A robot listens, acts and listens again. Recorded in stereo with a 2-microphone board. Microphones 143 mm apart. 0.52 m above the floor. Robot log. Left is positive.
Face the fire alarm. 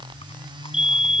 note: The fire alarm: about 55° right or 125° right.
cmd yaw -55
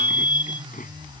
note: So it is at 70° right.
cmd yaw -70
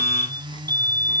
note: The fire alarm is now 25° right.
cmd yaw -25
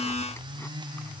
cmd idle
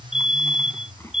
end: Facing the fire alarm.